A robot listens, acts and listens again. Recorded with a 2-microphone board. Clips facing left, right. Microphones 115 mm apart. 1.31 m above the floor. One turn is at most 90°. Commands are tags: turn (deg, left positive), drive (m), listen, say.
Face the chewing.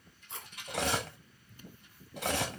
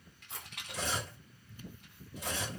<turn deg="-30"/>
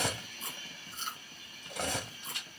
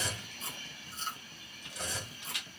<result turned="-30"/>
<turn deg="-90"/>
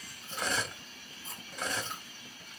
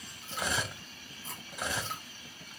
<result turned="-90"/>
<turn deg="-70"/>
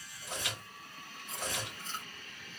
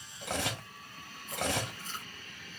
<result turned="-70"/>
<turn deg="25"/>
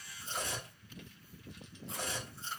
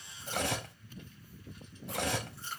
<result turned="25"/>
<turn deg="25"/>
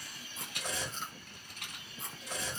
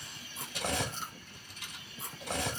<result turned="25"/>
<say>Found it: chewing, straight ahead.</say>